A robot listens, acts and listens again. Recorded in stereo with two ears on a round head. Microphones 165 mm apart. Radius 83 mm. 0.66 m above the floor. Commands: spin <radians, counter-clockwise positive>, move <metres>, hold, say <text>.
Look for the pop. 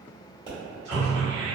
spin -0.52
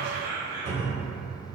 hold
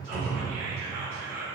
say I heard a pop, but can't make it out now. It was about straight ahead or 120° right.